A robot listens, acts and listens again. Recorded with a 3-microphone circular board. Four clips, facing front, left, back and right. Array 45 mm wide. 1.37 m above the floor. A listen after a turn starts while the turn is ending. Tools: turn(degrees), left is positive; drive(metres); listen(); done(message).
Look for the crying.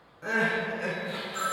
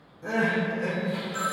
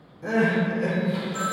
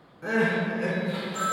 turn(degrees=-40)
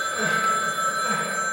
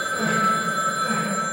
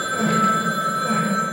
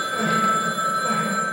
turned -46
turn(degrees=10)
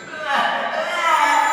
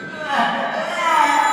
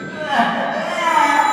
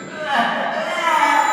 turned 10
done("Found it: crying, straight ahead, 1 to 2 m away.")